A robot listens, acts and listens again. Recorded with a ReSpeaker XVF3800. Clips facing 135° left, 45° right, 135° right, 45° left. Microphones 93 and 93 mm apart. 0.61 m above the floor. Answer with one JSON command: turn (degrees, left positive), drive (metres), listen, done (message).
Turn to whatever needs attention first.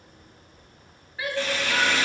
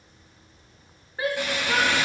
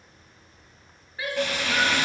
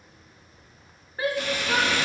{"done": "Facing the shout, 1 to 2 m away."}